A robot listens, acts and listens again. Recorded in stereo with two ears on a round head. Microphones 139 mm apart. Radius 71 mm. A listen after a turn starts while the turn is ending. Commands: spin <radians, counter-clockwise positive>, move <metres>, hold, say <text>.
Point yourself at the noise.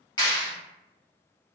spin 0.52
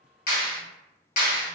spin 2.09
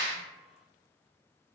spin -0.17
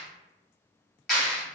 say Found it: a clap, straight ahead.